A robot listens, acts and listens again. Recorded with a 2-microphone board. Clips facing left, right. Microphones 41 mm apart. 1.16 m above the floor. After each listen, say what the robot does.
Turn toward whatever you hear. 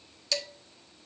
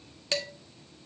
Turn 30° right.
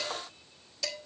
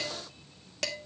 Turn 120° right.
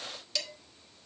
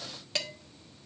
Turn 35° right.
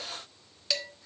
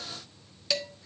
Found it: dishes clattering, straight ahead.